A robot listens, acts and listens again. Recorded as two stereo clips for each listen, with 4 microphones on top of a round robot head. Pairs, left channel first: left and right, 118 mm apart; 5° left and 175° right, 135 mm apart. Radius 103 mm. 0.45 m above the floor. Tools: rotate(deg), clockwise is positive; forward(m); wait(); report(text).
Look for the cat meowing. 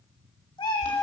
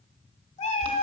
rotate(-35)
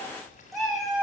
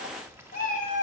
report("Facing the cat meowing.")